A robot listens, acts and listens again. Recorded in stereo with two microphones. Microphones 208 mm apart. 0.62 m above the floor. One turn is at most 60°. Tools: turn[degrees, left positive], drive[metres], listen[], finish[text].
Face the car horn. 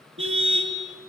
Thought: The car horn: about 75° right or 105° right.
Action: turn[-60]
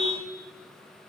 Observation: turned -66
Action: listen[]
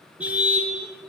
Action: finish[Found it: a car horn, straight ahead, over 4 m away.]